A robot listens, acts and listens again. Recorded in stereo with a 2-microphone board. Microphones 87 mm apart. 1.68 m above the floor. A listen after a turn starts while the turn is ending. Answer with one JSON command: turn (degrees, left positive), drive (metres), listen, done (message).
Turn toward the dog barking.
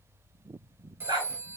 {"turn": -50}
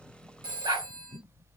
{"turn": -70}
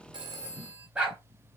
{"turn": -15}
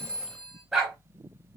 {"done": "Facing the dog barking, 2 to 4 m away."}